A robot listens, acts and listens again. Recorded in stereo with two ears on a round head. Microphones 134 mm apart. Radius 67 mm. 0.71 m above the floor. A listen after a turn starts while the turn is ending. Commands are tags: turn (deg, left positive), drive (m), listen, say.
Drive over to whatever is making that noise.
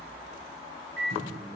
<turn deg="-90"/>
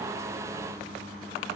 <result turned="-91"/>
<turn deg="-10"/>
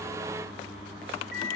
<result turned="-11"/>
<drive m="1.0"/>
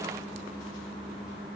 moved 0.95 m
<drive m="1.0"/>
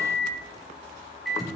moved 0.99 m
<drive m="1.0"/>
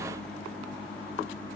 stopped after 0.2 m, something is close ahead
<turn deg="10"/>
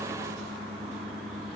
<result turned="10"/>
<say>Arrived at the microwave, straight ahead.</say>